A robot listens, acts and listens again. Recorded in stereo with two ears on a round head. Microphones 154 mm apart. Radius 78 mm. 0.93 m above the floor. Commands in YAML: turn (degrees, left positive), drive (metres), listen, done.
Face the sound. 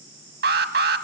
turn: -70
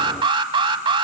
turn: -30
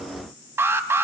turn: -15
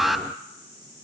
done: "Found it: an alarm, straight ahead."